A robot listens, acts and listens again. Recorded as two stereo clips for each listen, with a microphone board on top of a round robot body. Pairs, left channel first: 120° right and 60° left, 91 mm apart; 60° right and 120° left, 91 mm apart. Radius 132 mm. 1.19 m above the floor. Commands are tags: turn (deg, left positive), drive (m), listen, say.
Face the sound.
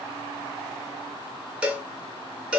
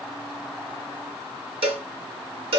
<turn deg="140"/>
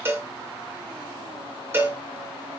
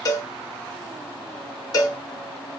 <say>Found it: a cowbell, straight ahead, under 1 m away.</say>